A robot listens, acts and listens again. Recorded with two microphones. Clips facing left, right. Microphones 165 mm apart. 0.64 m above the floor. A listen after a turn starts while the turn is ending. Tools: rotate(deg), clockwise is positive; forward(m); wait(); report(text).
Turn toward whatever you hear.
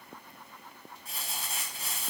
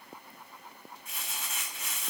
rotate(-35)
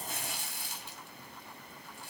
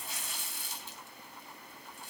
rotate(-110)
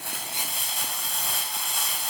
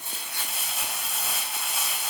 report("Facing the crumpling, 2 to 4 m away.")